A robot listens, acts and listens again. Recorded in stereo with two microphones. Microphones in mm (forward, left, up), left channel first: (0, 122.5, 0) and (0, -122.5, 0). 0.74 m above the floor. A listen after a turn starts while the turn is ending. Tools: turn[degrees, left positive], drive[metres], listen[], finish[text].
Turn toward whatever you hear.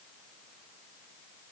Action: listen[]
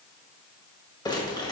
Thought: The crumpling: about 15° left or 165° left.
Action: turn[15]
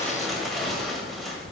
Action: listen[]
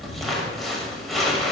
Action: finish[Facing the crumpling, 1 to 2 m away.]